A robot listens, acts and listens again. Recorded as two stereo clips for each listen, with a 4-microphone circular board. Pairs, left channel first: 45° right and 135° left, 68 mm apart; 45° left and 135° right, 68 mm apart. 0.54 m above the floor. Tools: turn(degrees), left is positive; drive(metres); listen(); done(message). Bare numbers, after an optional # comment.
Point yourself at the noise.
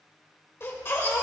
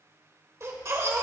# The baby crying: 95° right.
turn(-95)
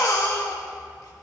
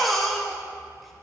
# The baby crying is now 45° right.
turn(-45)
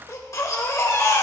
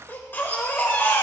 # The baby crying is now 10° right.
turn(-10)
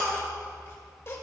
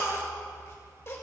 done("Facing the baby crying, 1 to 2 m away.")